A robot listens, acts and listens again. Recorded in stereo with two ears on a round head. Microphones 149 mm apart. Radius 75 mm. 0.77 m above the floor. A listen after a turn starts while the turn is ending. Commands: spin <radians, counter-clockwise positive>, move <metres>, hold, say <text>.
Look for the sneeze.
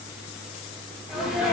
spin 0.52
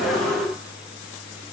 hold
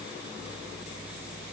say I heard a sneeze, but can't make it out now. It was about 30° right or 150° left.